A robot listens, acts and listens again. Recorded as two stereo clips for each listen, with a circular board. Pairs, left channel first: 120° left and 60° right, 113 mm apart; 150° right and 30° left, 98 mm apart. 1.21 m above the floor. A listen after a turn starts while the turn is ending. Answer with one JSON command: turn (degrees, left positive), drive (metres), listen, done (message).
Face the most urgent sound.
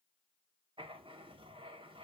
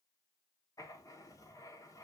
{"listen": true}
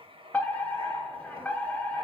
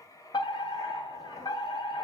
{"turn": -165}
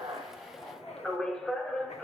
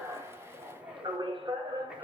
{"turn": 35}
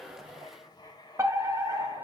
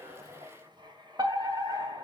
{"done": "Facing the fire alarm."}